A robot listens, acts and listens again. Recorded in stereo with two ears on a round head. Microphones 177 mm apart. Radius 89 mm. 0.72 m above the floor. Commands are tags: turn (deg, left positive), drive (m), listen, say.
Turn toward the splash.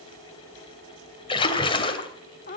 <turn deg="30"/>
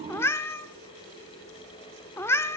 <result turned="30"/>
<listen/>
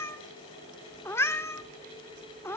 <say>I heard a splash, but can't make it out now. It was about straight ahead or 120° left.</say>